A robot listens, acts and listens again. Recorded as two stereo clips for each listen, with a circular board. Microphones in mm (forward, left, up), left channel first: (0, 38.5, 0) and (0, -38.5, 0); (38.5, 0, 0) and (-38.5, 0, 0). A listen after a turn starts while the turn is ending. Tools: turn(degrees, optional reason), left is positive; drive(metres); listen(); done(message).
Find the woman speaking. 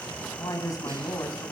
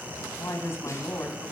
turn(degrees=55, reason="The woman speaking: 55° left.")
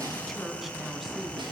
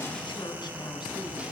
listen()
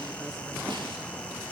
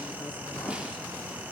listen()
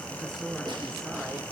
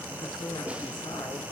done("Found it: a woman speaking, straight ahead.")